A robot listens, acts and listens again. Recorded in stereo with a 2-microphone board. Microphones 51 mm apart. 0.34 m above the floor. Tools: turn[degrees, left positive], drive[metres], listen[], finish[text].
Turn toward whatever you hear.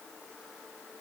Action: listen[]
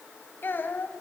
Thought: The child speaking: about 45° left or 135° left.
Action: turn[45]
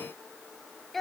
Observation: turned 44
Action: finish[Facing the child speaking.]